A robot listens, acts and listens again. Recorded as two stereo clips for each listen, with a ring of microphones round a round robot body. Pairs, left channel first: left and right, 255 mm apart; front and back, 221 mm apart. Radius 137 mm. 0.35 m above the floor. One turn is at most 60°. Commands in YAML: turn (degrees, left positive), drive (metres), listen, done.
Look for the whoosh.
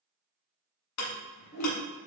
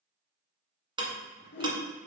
turn: 40
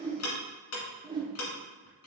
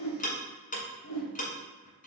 turn: -15
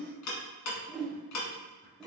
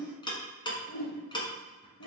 done: "Facing the whoosh."